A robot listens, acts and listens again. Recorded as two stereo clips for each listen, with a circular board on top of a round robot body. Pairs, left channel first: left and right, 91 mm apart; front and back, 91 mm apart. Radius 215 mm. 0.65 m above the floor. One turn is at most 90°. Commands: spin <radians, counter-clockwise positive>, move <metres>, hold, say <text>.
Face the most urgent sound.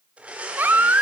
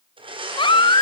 spin -0.35
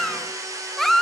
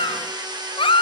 say Found it: a baby crying, straight ahead.